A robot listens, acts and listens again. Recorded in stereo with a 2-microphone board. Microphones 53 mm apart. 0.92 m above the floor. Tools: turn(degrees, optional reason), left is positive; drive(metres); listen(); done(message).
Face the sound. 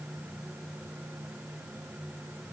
listen()
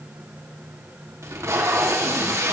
turn(degrees=-70, reason="The tape being pulled: about 70° right or 110° right.")
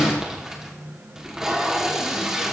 turn(degrees=-10, reason="So it is at 10° right.")
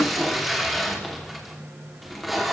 done("Found it: tape being pulled, straight ahead.")